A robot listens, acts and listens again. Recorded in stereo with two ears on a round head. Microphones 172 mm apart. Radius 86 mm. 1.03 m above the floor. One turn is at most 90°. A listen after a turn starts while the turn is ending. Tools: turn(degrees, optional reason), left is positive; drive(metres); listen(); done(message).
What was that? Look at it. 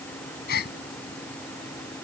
turn(degrees=55, reason="The gasp: about 55° left or 125° left.")
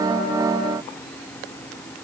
listen()
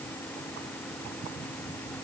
done("I heard a gasp, but can't make it out now. It was about straight ahead or 70° left.")